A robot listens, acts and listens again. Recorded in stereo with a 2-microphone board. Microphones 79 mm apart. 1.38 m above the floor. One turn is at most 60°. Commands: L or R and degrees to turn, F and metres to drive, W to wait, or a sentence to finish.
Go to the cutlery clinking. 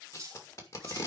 R40
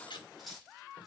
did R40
F1.0
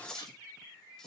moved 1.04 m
L10
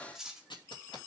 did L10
F1.0
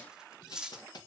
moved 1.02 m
R10
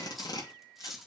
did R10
F1.0
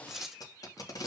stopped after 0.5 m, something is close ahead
Arrived at the cutlery clinking, straight ahead.